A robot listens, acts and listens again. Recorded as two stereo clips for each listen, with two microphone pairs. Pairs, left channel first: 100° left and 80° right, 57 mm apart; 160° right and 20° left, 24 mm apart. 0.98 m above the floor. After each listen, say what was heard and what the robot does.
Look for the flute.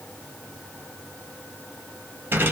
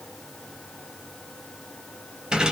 Keep listening.
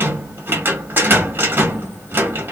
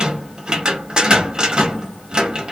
Keep listening.
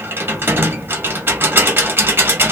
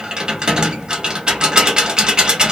I can't make out a flute, only a rattle.